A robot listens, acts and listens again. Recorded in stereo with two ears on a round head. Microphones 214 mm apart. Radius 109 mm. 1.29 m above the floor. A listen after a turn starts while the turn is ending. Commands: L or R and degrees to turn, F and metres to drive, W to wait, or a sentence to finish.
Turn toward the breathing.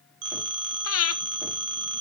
L65
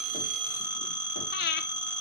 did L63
L45
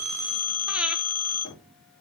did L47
W
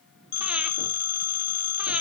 W
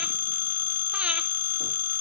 Facing where the breathing came from. I can't hear it now.